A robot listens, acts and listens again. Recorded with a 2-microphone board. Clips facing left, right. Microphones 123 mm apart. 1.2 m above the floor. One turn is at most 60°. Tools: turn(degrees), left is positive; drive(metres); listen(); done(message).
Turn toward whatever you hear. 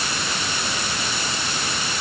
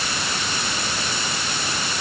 listen()
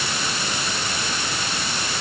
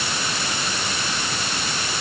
listen()
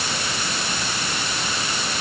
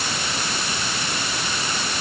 done("I can't make out anything.")